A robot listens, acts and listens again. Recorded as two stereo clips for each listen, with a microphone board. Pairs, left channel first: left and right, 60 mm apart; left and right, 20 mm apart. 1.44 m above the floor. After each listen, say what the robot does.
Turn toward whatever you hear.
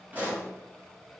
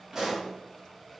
Turn 30° right.
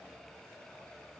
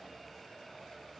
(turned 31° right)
Keep listening.
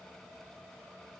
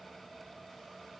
I heard a pop, but can't make it out now. It was about straight ahead or 120° right.